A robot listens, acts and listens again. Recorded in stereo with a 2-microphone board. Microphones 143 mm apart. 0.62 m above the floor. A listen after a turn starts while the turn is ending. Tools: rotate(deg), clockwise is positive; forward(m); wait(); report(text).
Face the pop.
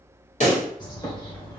rotate(-50)
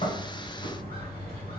wait()
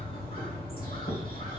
report("I heard a pop, but can't make it out now. It was about straight ahead or 80° left.")